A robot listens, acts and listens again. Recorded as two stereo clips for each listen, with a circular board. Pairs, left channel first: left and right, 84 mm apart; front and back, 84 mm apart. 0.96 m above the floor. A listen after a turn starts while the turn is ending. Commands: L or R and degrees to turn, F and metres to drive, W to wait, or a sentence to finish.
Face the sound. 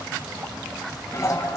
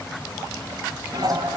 L145
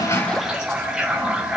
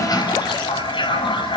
Facing the toilet flushing.